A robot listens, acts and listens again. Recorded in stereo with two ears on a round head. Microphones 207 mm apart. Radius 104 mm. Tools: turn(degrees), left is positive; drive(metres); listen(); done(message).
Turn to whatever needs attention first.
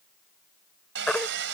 turn(degrees=30)
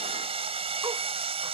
listen()
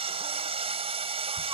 listen()
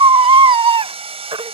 turn(degrees=-25)
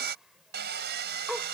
listen()
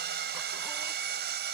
listen()
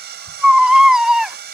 done("Facing the baby crying.")